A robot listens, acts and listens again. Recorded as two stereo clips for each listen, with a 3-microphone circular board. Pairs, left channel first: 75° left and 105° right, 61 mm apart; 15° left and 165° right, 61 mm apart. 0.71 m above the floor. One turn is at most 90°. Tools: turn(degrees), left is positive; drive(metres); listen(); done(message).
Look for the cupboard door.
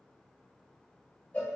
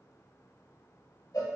listen()
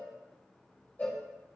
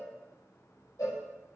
listen()
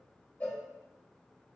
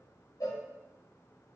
done("I can't make out a cupboard door, only a cowbell.")